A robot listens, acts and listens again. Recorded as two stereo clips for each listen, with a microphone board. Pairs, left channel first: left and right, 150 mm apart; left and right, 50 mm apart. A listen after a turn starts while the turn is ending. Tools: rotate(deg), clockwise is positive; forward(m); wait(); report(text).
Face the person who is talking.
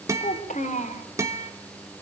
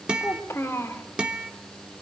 rotate(-55)
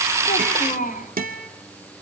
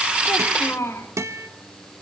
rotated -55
rotate(-65)
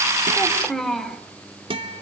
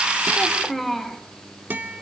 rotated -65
report("Found it: a child speaking, straight ahead.")